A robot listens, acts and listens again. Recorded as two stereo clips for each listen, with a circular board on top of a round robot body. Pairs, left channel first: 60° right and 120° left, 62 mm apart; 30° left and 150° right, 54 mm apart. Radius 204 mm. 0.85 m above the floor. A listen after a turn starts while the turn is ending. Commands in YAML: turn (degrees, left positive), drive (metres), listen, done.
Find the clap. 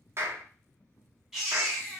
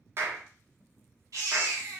turn: 170
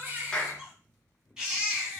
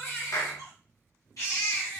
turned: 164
listen: true
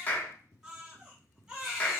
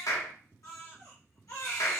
done: "Found it: a clap, straight ahead, under 1 m away."